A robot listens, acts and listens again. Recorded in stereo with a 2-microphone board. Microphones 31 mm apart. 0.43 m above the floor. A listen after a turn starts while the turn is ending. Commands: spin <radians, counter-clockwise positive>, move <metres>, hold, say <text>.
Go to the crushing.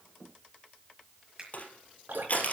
spin 0.87
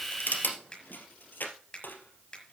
spin 1.40
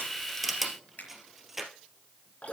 spin -0.17
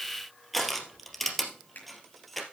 move 1.0
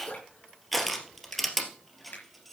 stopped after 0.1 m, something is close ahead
say Something is in my way. I am facing the crushing but have not reached it.